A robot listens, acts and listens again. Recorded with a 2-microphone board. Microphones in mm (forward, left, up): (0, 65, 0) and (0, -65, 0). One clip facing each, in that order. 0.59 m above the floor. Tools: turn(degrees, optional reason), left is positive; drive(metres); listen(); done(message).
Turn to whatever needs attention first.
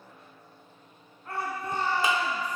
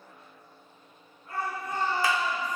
turn(degrees=90)
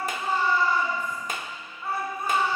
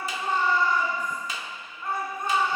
done("Facing the shout.")